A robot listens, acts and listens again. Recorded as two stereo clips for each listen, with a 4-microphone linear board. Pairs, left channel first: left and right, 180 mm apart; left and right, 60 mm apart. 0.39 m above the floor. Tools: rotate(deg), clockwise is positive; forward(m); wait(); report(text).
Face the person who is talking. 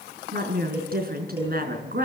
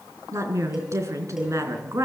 rotate(55)
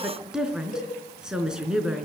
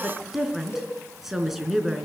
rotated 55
report("Facing the woman speaking.")